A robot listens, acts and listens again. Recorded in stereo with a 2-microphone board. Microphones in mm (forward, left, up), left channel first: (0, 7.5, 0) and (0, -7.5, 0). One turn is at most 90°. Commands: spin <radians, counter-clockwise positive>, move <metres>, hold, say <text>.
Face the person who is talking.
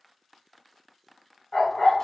hold
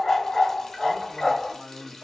spin 0.87
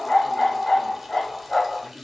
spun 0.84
spin 0.79
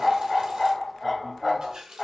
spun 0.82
hold
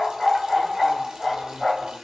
hold
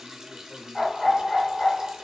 say I heard a man speaking from this way, but can't make it out now.